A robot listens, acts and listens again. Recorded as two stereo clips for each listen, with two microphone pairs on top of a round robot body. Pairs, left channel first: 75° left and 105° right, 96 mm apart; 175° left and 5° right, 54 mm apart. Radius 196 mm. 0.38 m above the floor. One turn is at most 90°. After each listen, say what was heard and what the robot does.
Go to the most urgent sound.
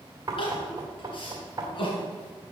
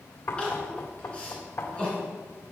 The crying: 105° left. Turn 90° left.
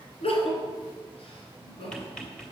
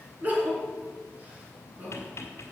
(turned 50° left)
The crying is now 55° left. Turn 55° left.
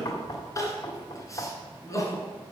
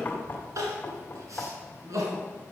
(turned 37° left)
The crying is now 20° left. Turn 20° left.
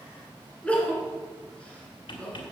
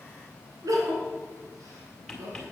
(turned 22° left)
Drive 1.0 m forward.
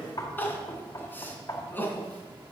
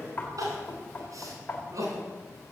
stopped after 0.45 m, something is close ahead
Blocked. The crying is further on, straight ahead.